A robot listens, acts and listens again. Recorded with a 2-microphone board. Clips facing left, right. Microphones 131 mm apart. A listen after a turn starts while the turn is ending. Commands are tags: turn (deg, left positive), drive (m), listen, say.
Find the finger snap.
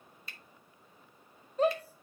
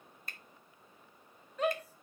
<turn deg="-50"/>
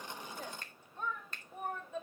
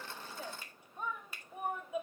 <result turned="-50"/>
<turn deg="-10"/>
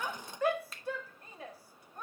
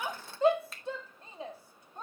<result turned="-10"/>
<say>Found it: a finger snap, straight ahead.</say>